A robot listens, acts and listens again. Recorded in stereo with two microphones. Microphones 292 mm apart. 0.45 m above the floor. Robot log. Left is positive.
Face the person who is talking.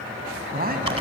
note: The man speaking: about 35° right or 145° right.
cmd yaw -35
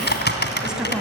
end: Found it: a man speaking, straight ahead, 2 to 4 m away.